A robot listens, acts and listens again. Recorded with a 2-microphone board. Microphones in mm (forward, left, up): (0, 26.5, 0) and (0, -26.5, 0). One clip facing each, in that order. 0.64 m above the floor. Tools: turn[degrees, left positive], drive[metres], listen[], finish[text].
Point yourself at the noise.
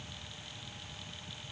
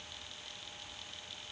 Action: listen[]
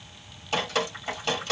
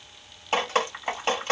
Thought: The dripping: about 35° right or 145° right.
Action: turn[-35]
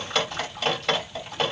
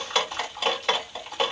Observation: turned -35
Action: finish[Found it: dripping, straight ahead.]